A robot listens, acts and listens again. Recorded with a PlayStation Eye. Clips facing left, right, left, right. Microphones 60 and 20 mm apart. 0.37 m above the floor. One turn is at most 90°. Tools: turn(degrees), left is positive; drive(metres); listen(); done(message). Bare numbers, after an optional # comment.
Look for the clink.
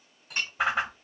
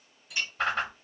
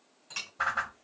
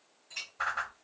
# The clink: about 50° left or 130° left.
turn(50)
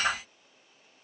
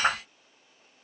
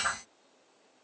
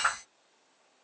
listen()
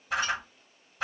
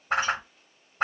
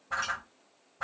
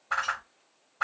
listen()
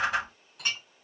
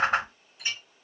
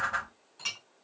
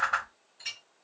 # So it is at 75° left.
turn(75)
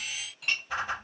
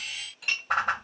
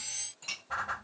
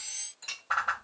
done("Found it: a clink, straight ahead.")